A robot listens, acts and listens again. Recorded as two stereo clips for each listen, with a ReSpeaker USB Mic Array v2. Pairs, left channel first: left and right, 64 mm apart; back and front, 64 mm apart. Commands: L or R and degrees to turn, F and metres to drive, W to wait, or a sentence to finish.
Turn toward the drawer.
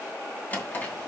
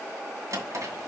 L25
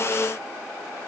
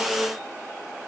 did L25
W
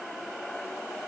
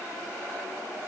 W
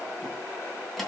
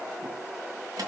Facing the drawer.